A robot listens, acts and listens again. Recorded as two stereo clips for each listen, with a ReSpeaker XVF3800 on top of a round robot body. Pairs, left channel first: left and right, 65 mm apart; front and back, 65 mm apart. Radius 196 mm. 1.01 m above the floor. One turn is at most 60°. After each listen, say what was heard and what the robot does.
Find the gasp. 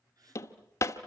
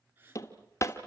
The gasp: 120° right. Turn 60° right.
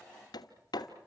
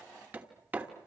Nothing new. It was at 60° right. Turn 60° right.
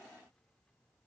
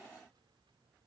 Facing where the gasp came from. I can't hear it now.